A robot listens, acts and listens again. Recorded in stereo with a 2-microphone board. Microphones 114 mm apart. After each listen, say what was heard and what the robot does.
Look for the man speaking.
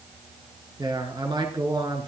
The man speaking: about 45° right or 135° right. Turn 45° right.
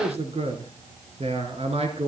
So it is at 90° right. Turn 90° right.
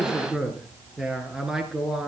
Found it: a man speaking, straight ahead, over 4 m away.